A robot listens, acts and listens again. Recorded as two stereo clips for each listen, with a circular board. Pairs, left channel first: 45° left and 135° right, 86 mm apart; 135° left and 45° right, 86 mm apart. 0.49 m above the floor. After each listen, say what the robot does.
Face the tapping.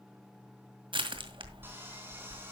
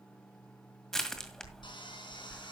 Keep listening.
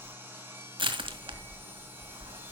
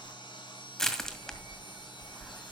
Keep listening.
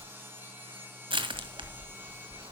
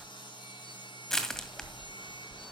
I can't make out tapping to turn to.